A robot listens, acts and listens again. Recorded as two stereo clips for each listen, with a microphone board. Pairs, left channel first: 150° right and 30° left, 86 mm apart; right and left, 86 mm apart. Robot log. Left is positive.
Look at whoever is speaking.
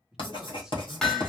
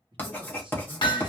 note: The man speaking: 115° left.
cmd yaw +115
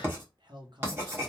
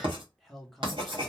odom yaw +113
end: Facing the man speaking, under 1 m away.